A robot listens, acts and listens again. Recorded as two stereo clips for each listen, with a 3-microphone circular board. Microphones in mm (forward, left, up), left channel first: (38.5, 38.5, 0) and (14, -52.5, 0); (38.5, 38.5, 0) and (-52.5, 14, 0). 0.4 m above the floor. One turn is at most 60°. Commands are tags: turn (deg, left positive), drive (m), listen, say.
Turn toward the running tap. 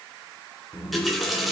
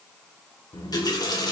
<turn deg="-15"/>
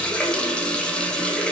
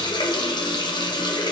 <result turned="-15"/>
<say>Found it: a running tap, straight ahead.</say>